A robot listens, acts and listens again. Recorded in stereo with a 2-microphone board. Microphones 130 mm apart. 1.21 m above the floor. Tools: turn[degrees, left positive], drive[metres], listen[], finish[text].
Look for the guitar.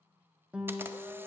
Action: turn[-30]
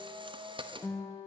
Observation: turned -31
Thought: So it is at 20° left.
Action: turn[20]
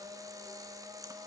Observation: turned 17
Action: listen[]
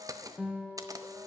Action: finish[Found it: a guitar, straight ahead.]